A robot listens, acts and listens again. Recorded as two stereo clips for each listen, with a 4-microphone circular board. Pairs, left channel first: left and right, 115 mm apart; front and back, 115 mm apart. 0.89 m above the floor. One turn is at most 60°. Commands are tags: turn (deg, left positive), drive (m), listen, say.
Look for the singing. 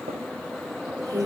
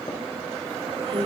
<turn deg="-60"/>
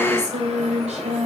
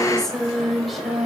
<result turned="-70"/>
<turn deg="-60"/>
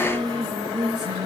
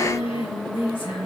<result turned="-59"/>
<turn deg="-45"/>
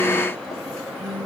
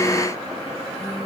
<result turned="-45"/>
<say>Found it: singing, straight ahead.</say>